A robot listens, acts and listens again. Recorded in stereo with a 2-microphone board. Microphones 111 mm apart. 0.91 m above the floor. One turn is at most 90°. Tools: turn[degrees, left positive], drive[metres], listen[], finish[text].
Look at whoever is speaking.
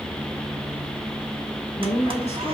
Thought: The woman speaking: about 70° left or 110° left.
Action: turn[70]
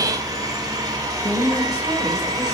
Action: finish[Facing the woman speaking.]